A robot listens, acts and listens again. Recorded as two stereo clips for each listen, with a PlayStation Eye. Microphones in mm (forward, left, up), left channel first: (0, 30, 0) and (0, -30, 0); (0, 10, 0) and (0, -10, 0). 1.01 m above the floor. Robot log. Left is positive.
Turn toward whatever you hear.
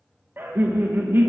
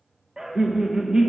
note: The laughter: about 35° right or 145° right.
cmd yaw -35
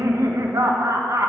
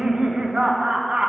note: So it is at 105° right.
cmd yaw -105
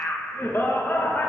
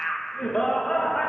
note: The laughter is now 45° left.
cmd yaw +45
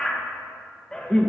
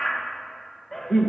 note: The laughter is now 15° left.
cmd yaw +15
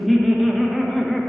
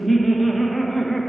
end: Facing the laughter.